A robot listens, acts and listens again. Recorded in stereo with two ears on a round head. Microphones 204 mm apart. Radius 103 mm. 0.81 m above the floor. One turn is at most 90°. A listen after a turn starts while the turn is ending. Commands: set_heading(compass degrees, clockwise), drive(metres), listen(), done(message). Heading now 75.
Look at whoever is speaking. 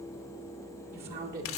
set_heading(120)
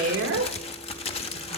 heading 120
set_heading(190)
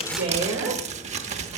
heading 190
set_heading(210)
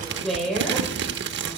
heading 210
done("Facing the woman speaking, over 4 m away.")